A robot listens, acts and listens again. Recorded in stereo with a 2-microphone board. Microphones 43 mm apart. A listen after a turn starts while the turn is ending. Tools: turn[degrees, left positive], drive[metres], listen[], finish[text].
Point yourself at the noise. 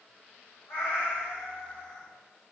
Thought: The cat meowing: about 75° left or 105° left.
Action: turn[75]
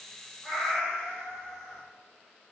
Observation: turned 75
Action: finish[Found it: a cat meowing, straight ahead, 1 to 2 m away.]